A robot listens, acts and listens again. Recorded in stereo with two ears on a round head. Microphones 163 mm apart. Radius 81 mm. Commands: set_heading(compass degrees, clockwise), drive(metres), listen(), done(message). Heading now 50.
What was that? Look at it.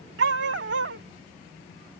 set_heading(125)
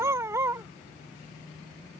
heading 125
set_heading(140)
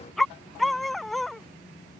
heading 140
done("Found it: a dog barking, straight ahead.")